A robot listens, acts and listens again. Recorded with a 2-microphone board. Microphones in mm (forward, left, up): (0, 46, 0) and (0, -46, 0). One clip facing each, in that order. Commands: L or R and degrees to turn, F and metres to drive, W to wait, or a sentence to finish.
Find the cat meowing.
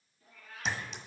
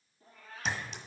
R35
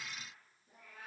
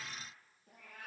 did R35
R115
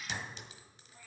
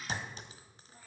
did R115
R35
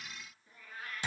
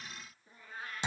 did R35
R30
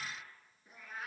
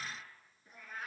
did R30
Facing the cat meowing.